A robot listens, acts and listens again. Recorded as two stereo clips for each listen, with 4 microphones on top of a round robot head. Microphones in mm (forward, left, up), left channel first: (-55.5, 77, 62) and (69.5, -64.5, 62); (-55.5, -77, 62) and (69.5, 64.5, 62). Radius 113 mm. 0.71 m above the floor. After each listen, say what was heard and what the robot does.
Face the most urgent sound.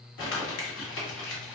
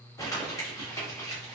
Keep listening.
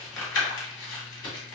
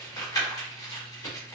Keep listening.
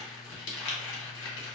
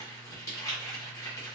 I can't make out anything urgent to turn to.